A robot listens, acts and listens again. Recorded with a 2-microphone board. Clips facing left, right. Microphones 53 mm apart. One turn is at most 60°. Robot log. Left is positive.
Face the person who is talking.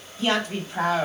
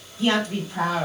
note: The woman speaking: about 35° left or 145° left.
cmd yaw +35
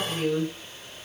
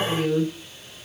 end: Found it: a woman speaking, straight ahead.